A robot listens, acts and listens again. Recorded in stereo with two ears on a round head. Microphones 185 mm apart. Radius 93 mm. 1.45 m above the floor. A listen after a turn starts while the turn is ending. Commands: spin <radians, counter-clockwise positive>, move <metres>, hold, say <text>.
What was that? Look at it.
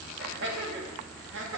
spin -1.13
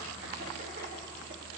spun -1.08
hold
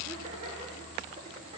hold
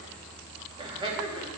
spin -0.44
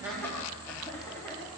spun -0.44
hold
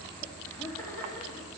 hold
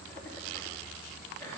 say Facing where the laughter came from. I can't hear it now.